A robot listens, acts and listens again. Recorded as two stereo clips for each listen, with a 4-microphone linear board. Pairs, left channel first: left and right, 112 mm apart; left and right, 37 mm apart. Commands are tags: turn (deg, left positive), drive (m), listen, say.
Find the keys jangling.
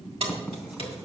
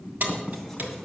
<turn deg="-60"/>
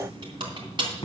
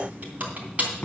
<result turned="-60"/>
<turn deg="-45"/>
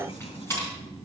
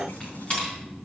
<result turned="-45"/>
<turn deg="25"/>
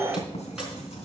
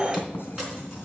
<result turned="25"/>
<listen/>
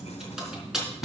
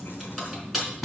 <say>Found it: keys jangling, straight ahead, over 4 m away.</say>